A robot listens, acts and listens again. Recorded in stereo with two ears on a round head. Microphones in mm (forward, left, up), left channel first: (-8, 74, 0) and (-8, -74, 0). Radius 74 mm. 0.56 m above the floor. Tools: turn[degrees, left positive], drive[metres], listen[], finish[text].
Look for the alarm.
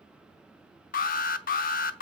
Thought: The alarm: about 55° left or 125° left.
Action: turn[55]
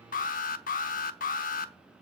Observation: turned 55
Thought: So it is at 60° left.
Action: turn[60]
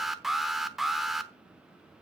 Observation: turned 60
Action: finish[Found it: an alarm, straight ahead.]